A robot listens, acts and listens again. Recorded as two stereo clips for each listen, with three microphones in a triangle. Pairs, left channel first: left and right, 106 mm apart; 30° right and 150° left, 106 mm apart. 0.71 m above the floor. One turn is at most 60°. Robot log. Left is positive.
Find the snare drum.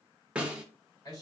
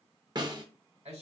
note: The snare drum: 165° right.
cmd yaw -60
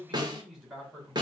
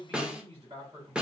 note: The snare drum is now 130° right.
cmd yaw -60
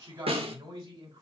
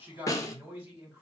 note: The snare drum is now 85° right.
cmd yaw -60
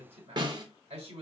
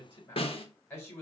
note: The snare drum is now 50° right.
cmd yaw -50
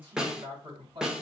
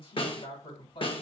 end: Found it: a snare drum, straight ahead, under 1 m away.